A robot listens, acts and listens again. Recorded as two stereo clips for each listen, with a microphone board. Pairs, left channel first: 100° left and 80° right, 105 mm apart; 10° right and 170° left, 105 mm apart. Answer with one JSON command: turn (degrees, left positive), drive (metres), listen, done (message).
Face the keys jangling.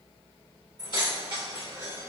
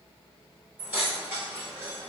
{"turn": -130}
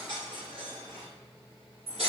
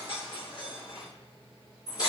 {"turn": -65}
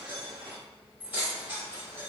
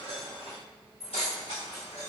{"turn": -15}
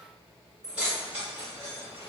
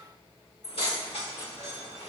{"done": "Facing the keys jangling, 1 to 2 m away."}